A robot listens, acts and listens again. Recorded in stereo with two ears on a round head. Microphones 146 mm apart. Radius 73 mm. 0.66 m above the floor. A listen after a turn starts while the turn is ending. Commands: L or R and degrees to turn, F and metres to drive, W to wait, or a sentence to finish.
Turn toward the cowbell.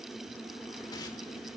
W
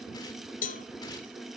L55
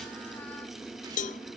L60
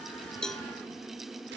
W
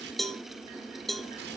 Facing the cowbell, under 1 m away.